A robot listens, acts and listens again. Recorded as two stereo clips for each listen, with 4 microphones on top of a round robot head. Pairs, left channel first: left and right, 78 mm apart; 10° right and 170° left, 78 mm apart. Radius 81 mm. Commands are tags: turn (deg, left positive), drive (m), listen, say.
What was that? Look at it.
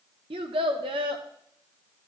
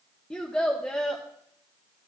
<turn deg="-90"/>
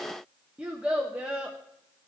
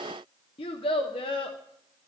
<turn deg="-15"/>
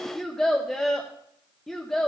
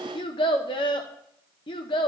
<say>Facing the child speaking, under 1 m away.</say>